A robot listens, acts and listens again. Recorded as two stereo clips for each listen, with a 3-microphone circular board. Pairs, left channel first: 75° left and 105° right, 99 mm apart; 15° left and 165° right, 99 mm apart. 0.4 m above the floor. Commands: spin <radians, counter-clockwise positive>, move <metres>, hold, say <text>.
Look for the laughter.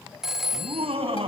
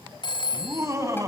spin -1.92
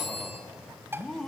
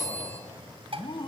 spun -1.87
spin -0.17
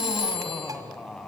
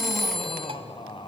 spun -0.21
say Facing the laughter.